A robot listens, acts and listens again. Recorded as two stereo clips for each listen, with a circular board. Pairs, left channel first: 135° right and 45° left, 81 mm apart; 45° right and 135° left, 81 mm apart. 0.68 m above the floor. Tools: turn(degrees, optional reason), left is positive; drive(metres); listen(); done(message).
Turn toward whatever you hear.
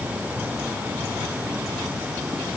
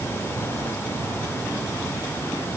listen()
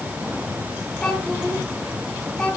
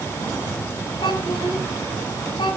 turn(degrees=-55, reason="The child speaking: 55° right.")
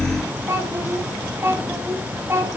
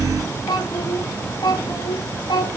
turn(degrees=-15, reason="The child speaking is now 15° right.")
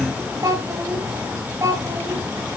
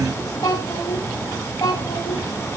done("Found it: a child speaking, straight ahead, 2 to 4 m away.")